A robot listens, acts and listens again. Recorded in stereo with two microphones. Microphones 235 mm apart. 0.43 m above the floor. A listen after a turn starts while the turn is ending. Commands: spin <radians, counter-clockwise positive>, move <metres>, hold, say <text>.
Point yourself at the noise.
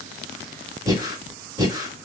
spin -0.26
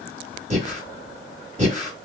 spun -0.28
spin -2.62
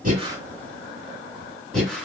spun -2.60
say Facing the breathing.